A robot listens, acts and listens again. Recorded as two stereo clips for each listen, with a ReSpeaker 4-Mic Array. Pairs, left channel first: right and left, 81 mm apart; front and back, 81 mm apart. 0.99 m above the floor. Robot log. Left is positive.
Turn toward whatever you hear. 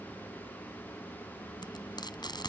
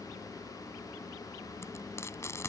note: The frying: 60° right.
cmd yaw -60
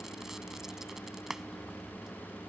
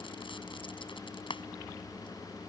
end: Found it: frying, straight ahead.